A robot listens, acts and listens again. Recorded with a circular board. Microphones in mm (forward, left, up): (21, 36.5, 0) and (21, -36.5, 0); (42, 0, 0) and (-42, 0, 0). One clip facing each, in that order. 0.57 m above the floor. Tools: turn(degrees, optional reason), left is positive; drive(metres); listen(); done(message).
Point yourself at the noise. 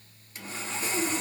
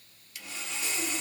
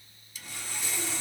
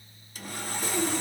turn(degrees=140, reason="The sawing: 140° left.")
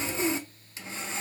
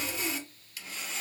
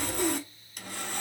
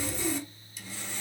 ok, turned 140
turn(degrees=30, reason="The sawing is now 30° left.")
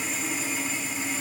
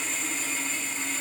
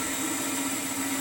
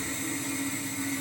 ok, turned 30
done("Facing the sawing, under 1 m away.")